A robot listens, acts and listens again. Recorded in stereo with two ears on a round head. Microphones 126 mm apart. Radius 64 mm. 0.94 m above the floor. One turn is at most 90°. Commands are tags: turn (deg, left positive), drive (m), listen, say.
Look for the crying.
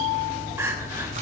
<turn deg="-15"/>
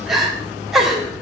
<say>Found it: crying, straight ahead, 2 to 4 m away.</say>